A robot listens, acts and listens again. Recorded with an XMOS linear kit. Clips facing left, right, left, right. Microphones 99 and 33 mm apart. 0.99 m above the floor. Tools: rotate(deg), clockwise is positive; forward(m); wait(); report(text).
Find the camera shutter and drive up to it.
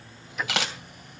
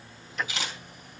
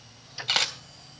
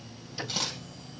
rotate(-90)
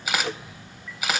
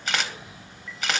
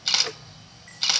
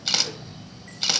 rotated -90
forward(1.0)
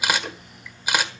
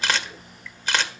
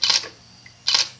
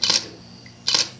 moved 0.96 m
rotate(-10)
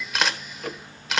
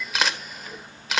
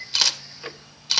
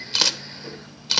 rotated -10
forward(1.0)
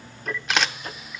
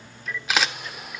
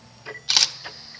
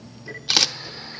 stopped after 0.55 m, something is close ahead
report("I am next to the camera shutter.")